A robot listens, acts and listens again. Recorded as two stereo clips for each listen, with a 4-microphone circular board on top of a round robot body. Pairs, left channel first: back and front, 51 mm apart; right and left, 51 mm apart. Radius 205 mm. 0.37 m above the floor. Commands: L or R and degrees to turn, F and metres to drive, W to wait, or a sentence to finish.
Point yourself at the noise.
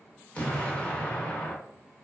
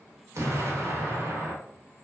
L115
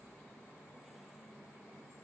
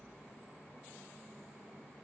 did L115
Facing where the explosion came from. I can't hear it now.